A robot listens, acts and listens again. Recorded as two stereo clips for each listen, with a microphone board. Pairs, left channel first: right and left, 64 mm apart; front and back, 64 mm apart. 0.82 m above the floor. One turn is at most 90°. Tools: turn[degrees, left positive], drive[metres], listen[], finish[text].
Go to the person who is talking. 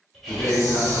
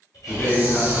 Thought: The man speaking: 45° right.
Action: turn[-45]
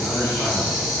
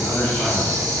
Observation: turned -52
Thought: Nothing new. It was at 10° left.
Action: turn[10]
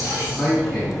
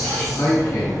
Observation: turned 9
Action: drive[1.0]
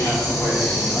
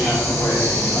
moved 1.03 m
Action: listen[]
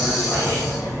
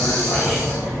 Action: listen[]
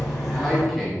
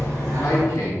Action: drive[1.0]
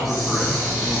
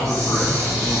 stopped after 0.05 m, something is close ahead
Action: listen[]
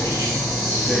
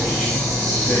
Action: listen[]
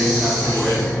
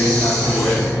Action: finish[Facing where the man speaking came from. I can't hear it now. I did not reach it.]